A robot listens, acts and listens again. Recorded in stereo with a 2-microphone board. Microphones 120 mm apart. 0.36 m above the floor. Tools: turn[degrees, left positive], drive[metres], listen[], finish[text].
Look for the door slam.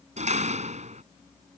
Thought: The door slam: about 70° right or 110° right.
Action: turn[-70]
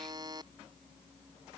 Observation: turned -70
Action: listen[]
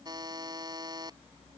Action: finish[I heard a door slam, but can't make it out now. It was about straight ahead or 40° right.]